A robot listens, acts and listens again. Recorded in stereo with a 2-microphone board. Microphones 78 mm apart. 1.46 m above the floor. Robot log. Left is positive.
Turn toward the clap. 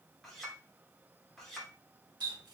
cmd idle
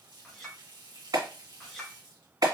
note: The clap: about 55° right or 125° right.
cmd yaw -55
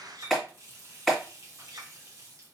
end: Found it: a clap, straight ahead.